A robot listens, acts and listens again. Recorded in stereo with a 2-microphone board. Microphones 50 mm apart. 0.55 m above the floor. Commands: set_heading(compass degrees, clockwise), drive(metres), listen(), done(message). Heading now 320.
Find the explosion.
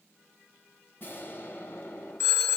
set_heading(280)
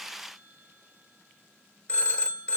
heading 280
listen()
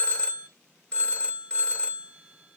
done("I heard an explosion, but can't make it out now. It was about straight ahead or 100° left.")